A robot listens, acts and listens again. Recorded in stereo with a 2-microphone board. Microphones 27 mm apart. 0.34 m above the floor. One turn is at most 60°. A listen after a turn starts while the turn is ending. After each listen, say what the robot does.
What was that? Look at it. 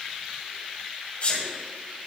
Turn 45° left.
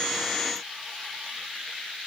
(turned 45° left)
Keep listening.
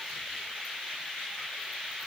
I heard a sneeze, but can't make it out now. It was about straight ahead or 90° left.